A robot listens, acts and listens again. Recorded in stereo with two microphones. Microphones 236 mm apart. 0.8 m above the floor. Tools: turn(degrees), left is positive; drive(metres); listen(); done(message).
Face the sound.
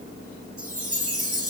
turn(degrees=-70)
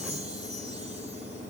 listen()
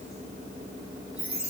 done("Found it: a chime, straight ahead.")